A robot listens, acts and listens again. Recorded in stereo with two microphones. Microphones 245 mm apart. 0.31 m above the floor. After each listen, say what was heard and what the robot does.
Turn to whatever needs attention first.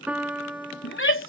The shout: about 50° left or 130° left. Turn 50° left.
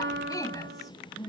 So it is at 15° left. Turn 15° left.
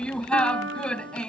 Found it: a shout, straight ahead.